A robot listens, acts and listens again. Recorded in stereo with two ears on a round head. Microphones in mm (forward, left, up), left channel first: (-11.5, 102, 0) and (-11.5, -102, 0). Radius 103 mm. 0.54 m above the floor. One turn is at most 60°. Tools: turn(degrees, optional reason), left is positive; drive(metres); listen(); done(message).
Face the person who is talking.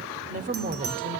turn(degrees=-35, reason="The woman speaking: about 35° right or 145° right.")
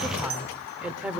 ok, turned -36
done("Facing the woman speaking, 1 to 2 m away.")